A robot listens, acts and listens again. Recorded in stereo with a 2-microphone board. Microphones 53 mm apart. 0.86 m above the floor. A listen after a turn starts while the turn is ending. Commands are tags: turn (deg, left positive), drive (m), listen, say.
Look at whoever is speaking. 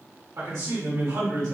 <turn deg="-65"/>
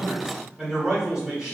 <turn deg="-10"/>
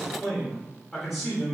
<say>Facing the man speaking, 1 to 2 m away.</say>